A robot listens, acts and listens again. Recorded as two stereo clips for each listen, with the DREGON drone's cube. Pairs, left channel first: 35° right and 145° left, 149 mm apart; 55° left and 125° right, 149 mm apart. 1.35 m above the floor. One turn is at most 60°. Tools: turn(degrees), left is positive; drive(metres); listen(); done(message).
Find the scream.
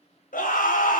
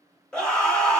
turn(degrees=-25)
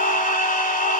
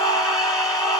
turn(degrees=-10)
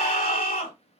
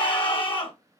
done("Facing the scream, under 1 m away.")